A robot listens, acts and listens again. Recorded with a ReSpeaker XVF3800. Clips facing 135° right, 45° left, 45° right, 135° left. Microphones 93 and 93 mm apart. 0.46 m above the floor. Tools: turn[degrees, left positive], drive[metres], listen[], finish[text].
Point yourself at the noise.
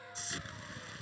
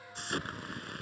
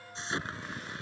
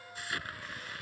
Thought: The explosion: 20° left.
Action: turn[20]
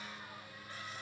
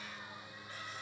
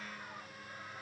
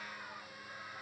Action: finish[I heard an explosion from this way, but can't make it out now.]